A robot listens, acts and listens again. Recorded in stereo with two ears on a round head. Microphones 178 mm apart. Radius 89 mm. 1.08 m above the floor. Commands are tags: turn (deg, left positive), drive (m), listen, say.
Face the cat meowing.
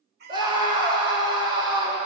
<turn deg="-55"/>
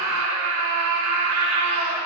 <listen/>
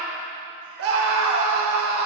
<listen/>
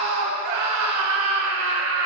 <say>I heard a cat meowing, but can't make it out now. It was about straight ahead or 70° right.</say>